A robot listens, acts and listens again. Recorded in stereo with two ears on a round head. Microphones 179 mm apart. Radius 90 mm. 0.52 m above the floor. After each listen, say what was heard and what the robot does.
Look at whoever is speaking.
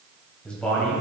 Turn 30° left.
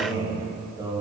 So it is at 25° right. Turn 25° right.
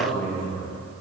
Facing the man speaking, 2 to 4 m away.